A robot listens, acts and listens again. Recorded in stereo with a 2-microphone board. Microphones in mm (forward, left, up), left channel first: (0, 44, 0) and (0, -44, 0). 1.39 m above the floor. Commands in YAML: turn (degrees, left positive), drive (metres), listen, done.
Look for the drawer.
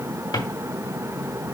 turn: 60
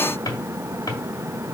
turn: 55
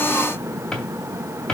turn: 10
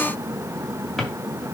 done: "Facing the drawer."